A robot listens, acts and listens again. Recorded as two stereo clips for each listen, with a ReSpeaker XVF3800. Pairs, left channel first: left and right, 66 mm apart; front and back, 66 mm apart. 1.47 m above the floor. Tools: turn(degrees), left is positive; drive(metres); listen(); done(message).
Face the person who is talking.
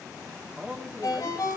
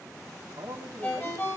turn(degrees=-160)
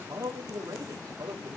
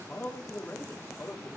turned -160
turn(degrees=-60)
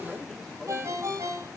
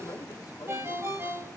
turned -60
listen()
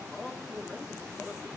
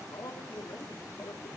turn(degrees=10)
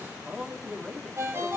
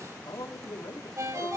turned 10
done("Found it: a man speaking, straight ahead, 2 to 4 m away.")